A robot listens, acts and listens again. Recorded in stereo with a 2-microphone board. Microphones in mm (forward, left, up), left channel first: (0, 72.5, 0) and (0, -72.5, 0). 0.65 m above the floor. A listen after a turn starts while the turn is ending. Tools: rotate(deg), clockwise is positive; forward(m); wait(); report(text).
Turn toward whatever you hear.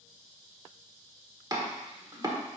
rotate(30)
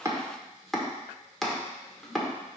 report("Facing the chopping.")